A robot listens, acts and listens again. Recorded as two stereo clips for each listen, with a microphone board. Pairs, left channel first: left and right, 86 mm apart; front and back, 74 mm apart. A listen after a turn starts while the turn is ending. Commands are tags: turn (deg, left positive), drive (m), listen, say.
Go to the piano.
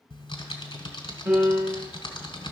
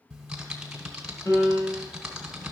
<turn deg="-35"/>
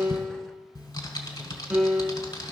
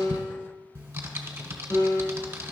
<turn deg="-10"/>
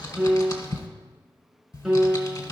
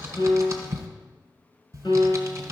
<drive m="1.0"/>
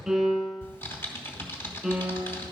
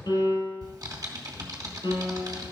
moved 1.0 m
<drive m="1.0"/>
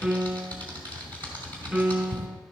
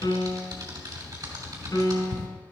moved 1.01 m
<drive m="1.0"/>
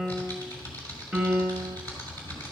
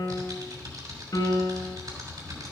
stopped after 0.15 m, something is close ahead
<say>I am next to the piano.</say>